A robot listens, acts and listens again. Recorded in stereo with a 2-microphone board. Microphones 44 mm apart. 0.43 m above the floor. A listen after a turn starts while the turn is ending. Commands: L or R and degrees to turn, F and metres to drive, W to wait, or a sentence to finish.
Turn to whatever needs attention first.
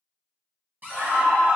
R60
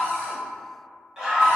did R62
R20
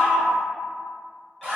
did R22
Facing the scream.